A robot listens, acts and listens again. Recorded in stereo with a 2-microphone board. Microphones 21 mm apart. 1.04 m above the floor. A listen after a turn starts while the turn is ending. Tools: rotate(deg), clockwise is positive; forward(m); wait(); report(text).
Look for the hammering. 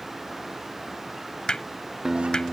rotate(-45)
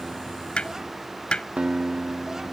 rotate(-85)
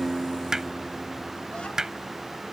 rotate(25)
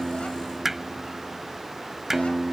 rotate(10)
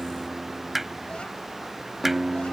report("Facing the hammering.")